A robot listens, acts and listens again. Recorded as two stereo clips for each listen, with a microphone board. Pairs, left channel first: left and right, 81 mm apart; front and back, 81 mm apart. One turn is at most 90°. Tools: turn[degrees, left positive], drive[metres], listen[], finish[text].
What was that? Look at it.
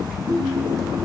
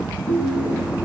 Thought: The ringtone: 145° right.
Action: turn[-90]
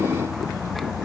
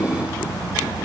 Thought: Nothing new. It was at 55° right.
Action: turn[-55]
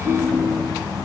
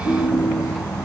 Thought: The ringtone is now 30° right.
Action: turn[-30]
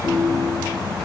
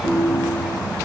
Action: finish[Found it: a ringtone, straight ahead.]